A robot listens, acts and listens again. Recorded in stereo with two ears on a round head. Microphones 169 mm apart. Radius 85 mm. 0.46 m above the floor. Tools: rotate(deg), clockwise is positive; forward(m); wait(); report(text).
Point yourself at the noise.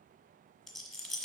rotate(-30)
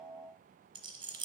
rotate(25)
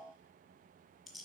report("Found it: a rattle, straight ahead, 1 to 2 m away.")